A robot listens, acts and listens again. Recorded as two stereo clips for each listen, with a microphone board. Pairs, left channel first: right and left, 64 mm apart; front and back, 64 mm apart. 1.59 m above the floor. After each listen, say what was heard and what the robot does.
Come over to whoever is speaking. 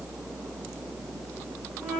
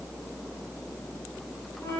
Keep listening.
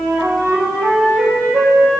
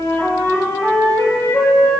Keep listening.
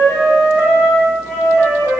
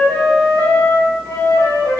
I can't make out anyone speaking, only a flute.